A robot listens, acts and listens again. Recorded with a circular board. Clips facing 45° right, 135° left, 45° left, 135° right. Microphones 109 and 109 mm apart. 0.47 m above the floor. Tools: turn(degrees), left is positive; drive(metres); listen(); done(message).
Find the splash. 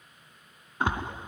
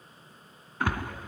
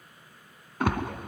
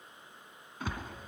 turn(degrees=25)
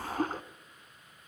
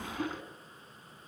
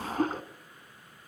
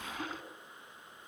done("Facing the splash.")